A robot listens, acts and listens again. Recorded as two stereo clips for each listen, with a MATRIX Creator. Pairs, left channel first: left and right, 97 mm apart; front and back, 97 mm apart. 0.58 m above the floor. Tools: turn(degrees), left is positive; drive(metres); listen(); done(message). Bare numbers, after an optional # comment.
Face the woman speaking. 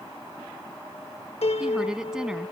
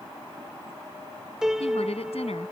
done("Found it: a woman speaking, straight ahead.")